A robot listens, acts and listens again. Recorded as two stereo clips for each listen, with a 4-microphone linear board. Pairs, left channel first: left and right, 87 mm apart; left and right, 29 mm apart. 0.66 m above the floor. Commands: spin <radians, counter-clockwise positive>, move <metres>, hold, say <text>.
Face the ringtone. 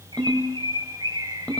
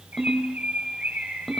spin 0.52
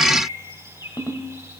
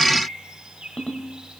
spin 2.36
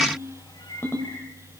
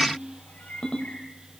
spin 0.52
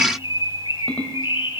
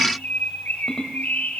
spin 0.26
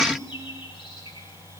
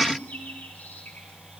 say Facing the ringtone, 1 to 2 m away.